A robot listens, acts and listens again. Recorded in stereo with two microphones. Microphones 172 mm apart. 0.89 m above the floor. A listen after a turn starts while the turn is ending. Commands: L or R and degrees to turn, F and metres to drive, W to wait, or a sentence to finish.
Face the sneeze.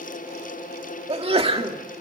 R35
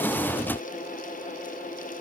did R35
W
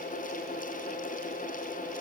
I heard a sneeze, but can't make it out now. It was about straight ahead or 110° right.